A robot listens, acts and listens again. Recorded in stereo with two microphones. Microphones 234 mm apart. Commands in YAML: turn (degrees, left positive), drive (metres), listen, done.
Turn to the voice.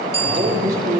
turn: -45
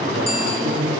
turn: -90
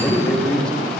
done: "Facing the man speaking."